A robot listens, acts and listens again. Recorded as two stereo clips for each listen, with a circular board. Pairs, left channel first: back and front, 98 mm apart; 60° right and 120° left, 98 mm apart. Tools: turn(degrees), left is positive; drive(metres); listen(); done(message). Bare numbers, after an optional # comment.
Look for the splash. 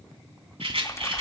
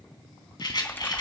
# The splash: 130° right.
turn(-130)
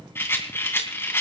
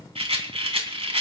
done("I heard a splash from this way, but can't make it out now.")